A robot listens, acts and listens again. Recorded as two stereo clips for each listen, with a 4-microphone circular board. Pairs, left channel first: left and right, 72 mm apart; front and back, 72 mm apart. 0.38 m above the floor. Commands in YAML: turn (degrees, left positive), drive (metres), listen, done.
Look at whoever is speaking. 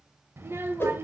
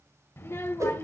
turn: -45
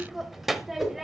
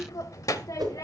done: "Facing the child speaking, under 1 m away."